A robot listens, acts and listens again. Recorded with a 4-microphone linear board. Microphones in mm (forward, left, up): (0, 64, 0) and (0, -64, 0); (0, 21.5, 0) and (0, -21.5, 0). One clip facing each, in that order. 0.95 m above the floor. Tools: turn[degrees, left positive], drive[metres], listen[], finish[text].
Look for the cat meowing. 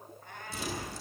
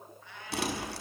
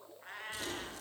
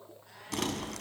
Thought: The cat meowing: about 50° left or 130° left.
Action: turn[50]
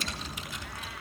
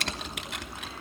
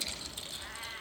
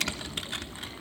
Action: listen[]
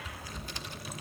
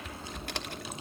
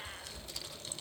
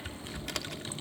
Action: listen[]
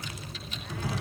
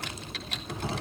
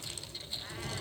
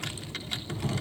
Action: finish[I heard a cat meowing, but can't make it out now. It was about straight ahead or 80° left.]